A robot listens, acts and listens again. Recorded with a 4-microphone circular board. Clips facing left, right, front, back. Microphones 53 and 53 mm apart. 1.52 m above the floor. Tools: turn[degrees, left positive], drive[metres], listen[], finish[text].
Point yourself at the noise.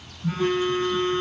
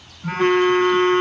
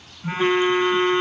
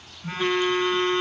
Thought: The phone buzzing: 70° right.
Action: turn[-70]
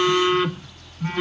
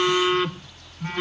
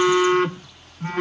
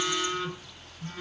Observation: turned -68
Action: finish[Facing the phone buzzing.]